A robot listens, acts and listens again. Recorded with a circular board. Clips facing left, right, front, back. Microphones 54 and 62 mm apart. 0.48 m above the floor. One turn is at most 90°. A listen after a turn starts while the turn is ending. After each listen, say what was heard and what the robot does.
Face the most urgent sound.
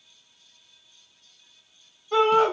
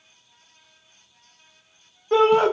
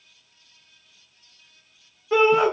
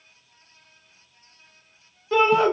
The shout: 75° right. Turn 75° right.
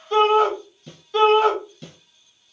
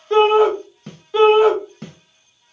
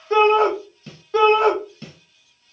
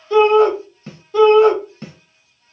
The shout is now 15° right. Turn 15° right.
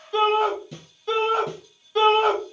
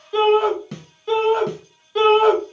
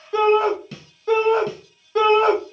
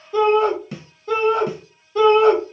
Facing the shout.